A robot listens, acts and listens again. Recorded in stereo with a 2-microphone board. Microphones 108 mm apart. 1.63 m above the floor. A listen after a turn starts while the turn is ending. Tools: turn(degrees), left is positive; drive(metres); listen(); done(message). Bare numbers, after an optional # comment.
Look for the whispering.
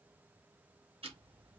listen()
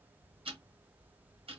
listen()
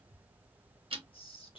# The whispering: about 55° left or 125° left.
turn(55)
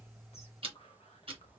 # So it is at 70° left.
turn(70)
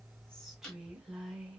done("Facing the whispering.")